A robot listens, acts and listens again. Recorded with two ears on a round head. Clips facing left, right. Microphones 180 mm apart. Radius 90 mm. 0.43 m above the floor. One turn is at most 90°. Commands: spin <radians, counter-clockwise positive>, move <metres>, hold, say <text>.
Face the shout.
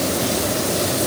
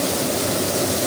hold
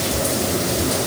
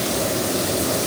hold
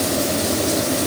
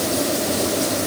say I can't make out a shout to turn to.